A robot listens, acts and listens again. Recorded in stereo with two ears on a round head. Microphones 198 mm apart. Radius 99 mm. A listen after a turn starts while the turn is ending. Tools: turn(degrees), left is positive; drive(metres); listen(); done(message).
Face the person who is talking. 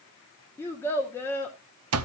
turn(degrees=30)
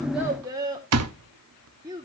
turn(degrees=-15)
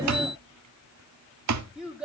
done("Facing the child speaking, 1 to 2 m away.")